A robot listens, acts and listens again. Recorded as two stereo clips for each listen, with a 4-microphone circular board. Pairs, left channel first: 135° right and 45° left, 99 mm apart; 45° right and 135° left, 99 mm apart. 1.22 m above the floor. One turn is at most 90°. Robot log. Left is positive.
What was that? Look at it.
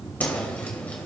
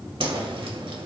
note: The whoosh: 150° left.
cmd yaw +90
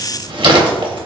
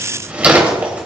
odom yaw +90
note: The whoosh is now 65° left.
cmd yaw +65
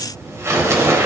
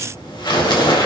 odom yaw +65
note: The whoosh is now 15° right.
cmd yaw -15
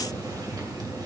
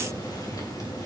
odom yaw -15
cmd idle
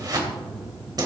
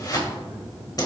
end: Facing the whoosh, 2 to 4 m away.